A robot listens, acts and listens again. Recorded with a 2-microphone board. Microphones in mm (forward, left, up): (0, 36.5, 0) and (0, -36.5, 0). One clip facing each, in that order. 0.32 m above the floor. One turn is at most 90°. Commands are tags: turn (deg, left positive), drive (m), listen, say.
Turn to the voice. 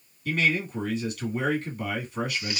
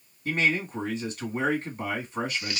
<turn deg="-30"/>
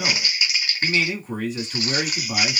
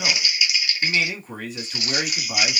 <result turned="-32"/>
<say>Found it: a man speaking, straight ahead.</say>